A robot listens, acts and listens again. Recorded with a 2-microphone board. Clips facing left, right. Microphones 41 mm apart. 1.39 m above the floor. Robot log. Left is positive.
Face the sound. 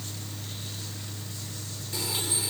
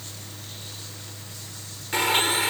note: The blender: about 65° right or 115° right.
cmd yaw -65
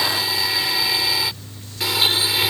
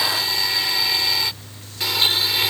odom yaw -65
end: Facing the blender.